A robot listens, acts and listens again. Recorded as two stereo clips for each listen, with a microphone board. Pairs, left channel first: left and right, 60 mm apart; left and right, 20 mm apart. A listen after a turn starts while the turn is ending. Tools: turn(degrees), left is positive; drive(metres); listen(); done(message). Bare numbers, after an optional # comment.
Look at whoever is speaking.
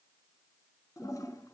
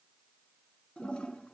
listen()
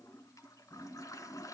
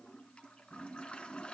listen()
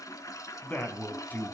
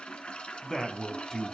# The man speaking: about 25° left or 155° left.
turn(25)
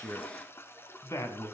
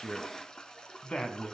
# So it is at 125° left.
turn(125)
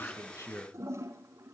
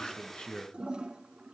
# The man speaking is now 35° left.
turn(35)
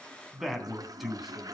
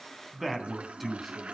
done("Found it: a man speaking, straight ahead.")